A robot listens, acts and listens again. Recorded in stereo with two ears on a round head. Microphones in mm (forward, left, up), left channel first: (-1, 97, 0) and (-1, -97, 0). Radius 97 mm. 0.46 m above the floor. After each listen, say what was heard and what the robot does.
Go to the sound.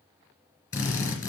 The drill: about 15° left or 165° left. Turn 15° left.
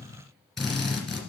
Drive 1.0 m forward.
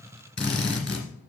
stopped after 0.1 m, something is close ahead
Something is in my way. I am facing the drill but have not reached it.